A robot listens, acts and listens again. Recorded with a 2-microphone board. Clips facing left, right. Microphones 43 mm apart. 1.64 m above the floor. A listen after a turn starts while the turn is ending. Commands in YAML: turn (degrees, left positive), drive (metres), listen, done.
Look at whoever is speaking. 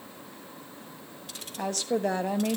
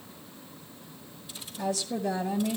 turn: 60
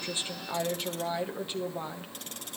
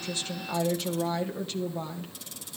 turn: 20
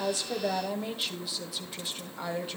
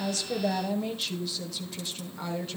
turn: 10
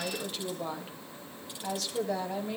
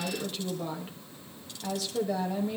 done: "Found it: a woman speaking, straight ahead."